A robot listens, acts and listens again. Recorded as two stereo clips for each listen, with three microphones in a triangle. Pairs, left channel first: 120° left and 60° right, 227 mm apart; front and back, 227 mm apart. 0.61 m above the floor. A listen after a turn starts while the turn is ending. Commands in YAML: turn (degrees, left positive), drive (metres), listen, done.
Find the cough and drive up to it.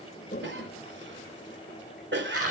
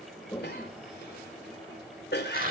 turn: -35
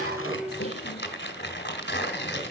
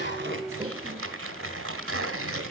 listen: true
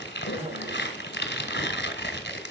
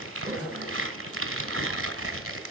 drive: 1.0
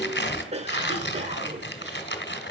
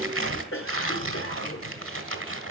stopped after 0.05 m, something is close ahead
done: "Blocked. The cough is further on, straight ahead."